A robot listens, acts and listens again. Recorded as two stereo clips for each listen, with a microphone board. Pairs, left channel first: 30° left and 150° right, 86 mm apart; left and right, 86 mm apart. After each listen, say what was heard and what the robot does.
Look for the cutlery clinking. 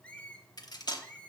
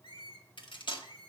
The cutlery clinking: 70° left. Turn 70° left.
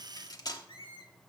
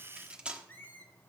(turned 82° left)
The cutlery clinking is now 10° right. Turn 10° right.
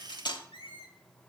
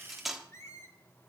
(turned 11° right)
Found it: cutlery clinking, straight ahead.